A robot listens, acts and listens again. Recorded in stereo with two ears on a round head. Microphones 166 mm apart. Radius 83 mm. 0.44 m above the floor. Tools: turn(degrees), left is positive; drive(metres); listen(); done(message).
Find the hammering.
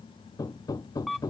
turn(degrees=20)
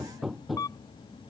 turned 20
done("Facing the hammering.")